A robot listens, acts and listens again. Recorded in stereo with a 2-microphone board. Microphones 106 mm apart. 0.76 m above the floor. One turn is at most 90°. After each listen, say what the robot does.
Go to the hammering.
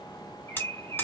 Turn 15° left.
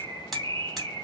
Drive 1.0 m forward.
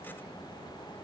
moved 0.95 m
Keep listening.
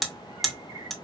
Drive 1.0 m forward.
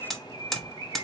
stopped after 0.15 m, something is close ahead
Arrived at the hammering, straight ahead.